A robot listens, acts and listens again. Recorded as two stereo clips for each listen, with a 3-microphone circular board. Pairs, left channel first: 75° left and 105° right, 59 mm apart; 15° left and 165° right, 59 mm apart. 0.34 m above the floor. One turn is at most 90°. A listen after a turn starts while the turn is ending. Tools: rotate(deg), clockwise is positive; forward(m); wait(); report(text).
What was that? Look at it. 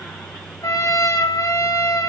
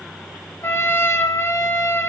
rotate(-65)
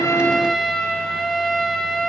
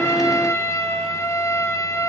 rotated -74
report("Found it: a trumpet, straight ahead.")